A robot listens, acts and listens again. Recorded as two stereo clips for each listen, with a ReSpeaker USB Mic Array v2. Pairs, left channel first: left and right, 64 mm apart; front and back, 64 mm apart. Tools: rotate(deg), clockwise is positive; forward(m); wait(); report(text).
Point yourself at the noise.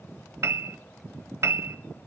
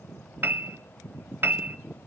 rotate(130)
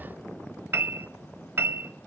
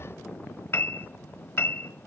rotate(45)
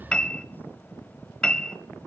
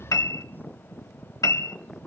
rotate(-20)
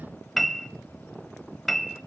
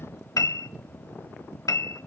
report("Facing the piano.")